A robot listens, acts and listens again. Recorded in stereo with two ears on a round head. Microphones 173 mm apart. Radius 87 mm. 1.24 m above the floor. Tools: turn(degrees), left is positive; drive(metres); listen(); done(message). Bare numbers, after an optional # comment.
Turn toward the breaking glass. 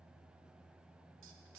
listen()
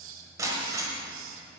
# The breaking glass: about 15° right or 165° right.
turn(-15)
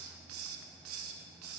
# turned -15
listen()
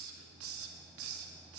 done("I heard breaking glass, but can't make it out now. It was about straight ahead or 150° right.")